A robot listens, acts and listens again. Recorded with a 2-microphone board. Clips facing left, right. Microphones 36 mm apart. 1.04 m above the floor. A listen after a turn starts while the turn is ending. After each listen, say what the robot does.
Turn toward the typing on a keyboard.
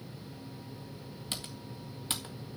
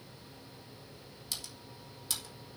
Turn 40° left.
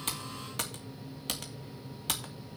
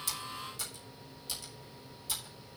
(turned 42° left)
Turn 95° left.
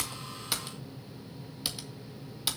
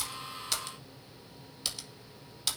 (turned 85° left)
Turn 10° left.
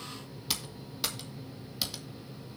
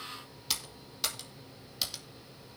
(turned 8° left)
Found it: typing on a keyboard, straight ahead, 1 to 2 m away.